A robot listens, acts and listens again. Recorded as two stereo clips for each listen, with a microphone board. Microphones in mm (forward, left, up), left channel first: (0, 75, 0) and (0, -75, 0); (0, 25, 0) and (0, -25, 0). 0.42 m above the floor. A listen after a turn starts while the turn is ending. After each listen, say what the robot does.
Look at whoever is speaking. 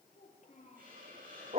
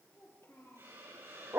Turn 60° left.
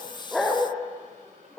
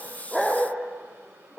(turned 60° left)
Keep listening.
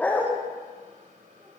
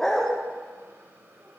Keep listening.
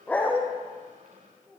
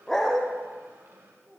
Facing the child speaking.